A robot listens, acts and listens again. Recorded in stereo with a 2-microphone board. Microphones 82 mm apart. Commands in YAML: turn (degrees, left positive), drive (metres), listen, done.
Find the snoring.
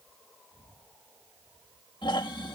turn: 90
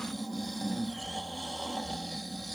done: "Facing the snoring."